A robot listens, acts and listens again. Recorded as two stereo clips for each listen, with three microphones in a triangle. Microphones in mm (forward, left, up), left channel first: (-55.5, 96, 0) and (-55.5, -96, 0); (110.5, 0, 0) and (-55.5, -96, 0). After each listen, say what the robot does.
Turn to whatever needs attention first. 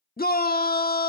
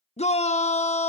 Turn 75° left.
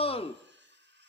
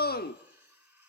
Turn 40° left.
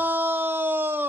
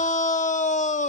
Turn 10° right.
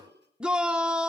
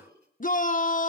Found it: a shout, straight ahead.